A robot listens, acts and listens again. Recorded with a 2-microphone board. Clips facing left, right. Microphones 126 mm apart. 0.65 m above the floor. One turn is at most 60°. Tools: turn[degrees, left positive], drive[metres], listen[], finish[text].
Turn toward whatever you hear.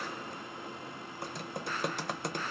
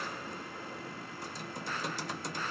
Thought: The typing on a keyboard: about 60° left or 120° left.
Action: turn[60]
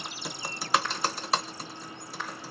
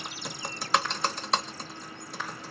Action: finish[Found it: typing on a keyboard, straight ahead.]